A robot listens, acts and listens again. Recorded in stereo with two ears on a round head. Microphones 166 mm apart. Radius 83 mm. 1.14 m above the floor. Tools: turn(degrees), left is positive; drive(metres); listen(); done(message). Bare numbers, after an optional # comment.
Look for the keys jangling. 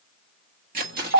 # The keys jangling: about 55° right or 125° right.
turn(-55)
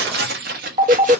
# So it is at 50° right.
turn(-50)
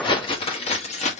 # The keys jangling is now 40° left.
turn(40)
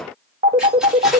listen()
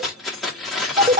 done("Found it: keys jangling, straight ahead.")